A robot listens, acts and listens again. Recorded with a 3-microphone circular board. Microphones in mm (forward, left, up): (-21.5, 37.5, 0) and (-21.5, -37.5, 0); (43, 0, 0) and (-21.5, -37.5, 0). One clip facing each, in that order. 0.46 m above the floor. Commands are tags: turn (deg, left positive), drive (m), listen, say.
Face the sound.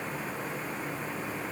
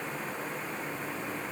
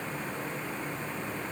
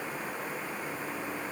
<listen/>
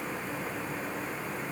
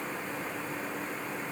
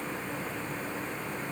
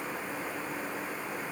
<listen/>
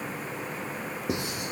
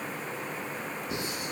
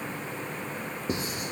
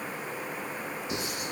<turn deg="80"/>
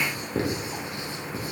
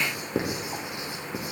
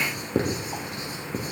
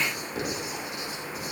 <turn deg="-20"/>
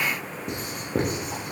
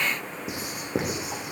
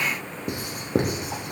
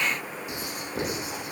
<say>Facing the writing.</say>